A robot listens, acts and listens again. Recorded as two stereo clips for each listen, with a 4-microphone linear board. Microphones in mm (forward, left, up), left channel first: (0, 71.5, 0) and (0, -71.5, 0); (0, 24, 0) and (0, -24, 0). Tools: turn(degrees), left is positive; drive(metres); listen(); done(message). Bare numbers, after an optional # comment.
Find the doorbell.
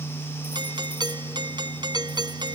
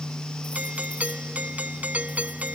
# The doorbell: about 30° right or 150° right.
turn(-30)
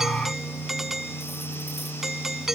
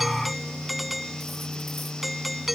done("Found it: a doorbell, straight ahead.")